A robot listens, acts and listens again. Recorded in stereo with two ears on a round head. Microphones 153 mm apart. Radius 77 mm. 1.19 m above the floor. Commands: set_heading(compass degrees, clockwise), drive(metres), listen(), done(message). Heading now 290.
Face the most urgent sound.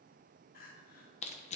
set_heading(230)
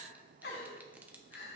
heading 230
set_heading(165)
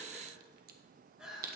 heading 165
done("Facing the crying, 2 to 4 m away.")